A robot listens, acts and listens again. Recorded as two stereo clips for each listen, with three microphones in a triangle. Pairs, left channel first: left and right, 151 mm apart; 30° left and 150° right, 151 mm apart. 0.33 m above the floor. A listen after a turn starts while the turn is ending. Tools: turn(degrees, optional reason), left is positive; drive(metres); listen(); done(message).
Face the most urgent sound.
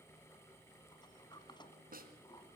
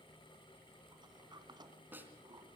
listen()
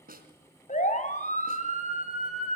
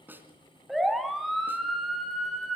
turn(degrees=120, reason="The siren: 120° left.")
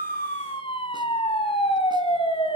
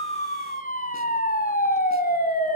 turn(degrees=40, reason="The siren is now 40° left.")
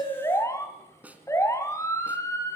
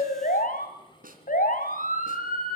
turn(degrees=20, reason="The siren is now 20° left.")
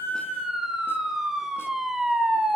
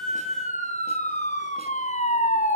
done("Found it: a siren, straight ahead, 2 to 4 m away.")